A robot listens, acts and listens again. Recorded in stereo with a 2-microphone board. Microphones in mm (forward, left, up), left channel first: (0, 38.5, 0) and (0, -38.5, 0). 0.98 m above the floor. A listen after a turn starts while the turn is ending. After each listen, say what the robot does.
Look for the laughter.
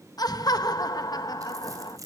Turn 55° left.
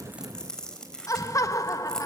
Turn 50° left.
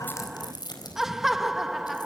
Found it: laughter, straight ahead, 1 to 2 m away.